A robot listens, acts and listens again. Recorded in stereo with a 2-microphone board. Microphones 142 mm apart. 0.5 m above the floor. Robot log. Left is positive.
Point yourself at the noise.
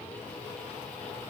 cmd idle
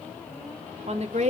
note: The woman speaking: about 50° right or 130° right.
cmd yaw -50
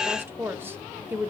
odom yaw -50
note: So it is at 20° right.
cmd yaw -20
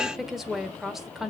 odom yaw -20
end: Facing the woman speaking.